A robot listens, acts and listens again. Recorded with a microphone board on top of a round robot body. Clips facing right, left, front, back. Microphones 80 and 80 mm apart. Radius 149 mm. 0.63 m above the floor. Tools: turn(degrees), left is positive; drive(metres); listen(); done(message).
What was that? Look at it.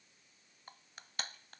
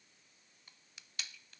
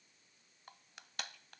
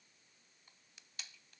turn(degrees=-40)
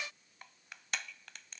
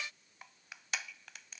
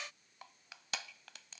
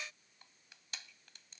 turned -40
done("Found it: crushing, straight ahead.")